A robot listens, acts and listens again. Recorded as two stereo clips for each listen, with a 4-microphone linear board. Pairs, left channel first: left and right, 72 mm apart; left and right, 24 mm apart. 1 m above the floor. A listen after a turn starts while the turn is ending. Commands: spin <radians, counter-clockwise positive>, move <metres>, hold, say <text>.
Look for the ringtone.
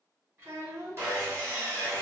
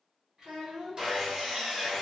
hold
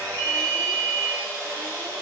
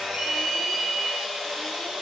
spin -1.57
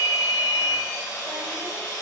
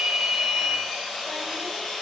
spin 0.17
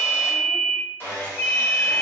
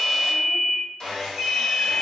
say Facing the ringtone, 1 to 2 m away.